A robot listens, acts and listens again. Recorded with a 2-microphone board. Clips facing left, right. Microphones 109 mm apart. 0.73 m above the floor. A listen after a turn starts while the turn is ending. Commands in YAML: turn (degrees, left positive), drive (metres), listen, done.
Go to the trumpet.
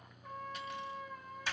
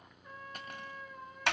turn: 90
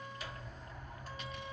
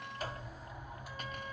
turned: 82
turn: 10
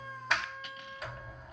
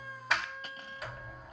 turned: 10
drive: 1.0
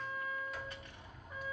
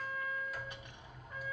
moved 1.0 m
drive: 1.0
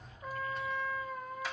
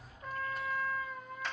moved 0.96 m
drive: 1.0
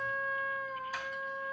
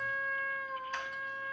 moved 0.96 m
drive: 1.0
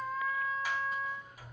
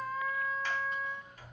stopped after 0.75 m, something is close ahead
done: "I am next to the trumpet."